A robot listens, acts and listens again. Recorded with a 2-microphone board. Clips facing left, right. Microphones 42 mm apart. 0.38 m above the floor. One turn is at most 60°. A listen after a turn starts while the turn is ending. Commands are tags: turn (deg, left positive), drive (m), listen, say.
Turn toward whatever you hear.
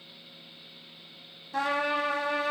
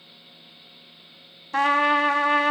<turn deg="-60"/>
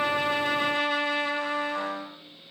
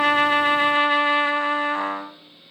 <turn deg="-45"/>
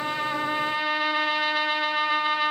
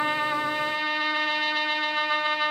<say>Facing the trumpet, under 1 m away.</say>